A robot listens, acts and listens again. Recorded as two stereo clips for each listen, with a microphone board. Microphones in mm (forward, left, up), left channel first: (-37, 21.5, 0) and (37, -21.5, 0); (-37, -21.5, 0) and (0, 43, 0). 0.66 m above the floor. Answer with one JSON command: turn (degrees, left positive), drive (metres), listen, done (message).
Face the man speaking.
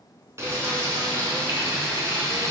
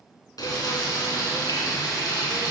{"listen": true}
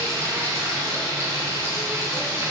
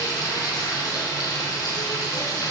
{"listen": true}
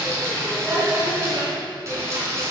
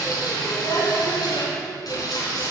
{"done": "I can't make out a man speaking, only frying."}